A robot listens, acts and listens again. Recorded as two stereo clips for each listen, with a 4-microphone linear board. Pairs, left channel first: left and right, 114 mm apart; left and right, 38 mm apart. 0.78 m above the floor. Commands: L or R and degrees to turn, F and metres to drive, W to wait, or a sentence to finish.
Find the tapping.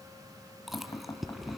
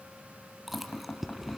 L30
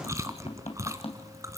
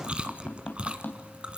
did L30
L120
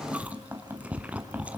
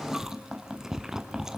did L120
R15
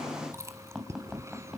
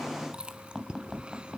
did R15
Facing the tapping.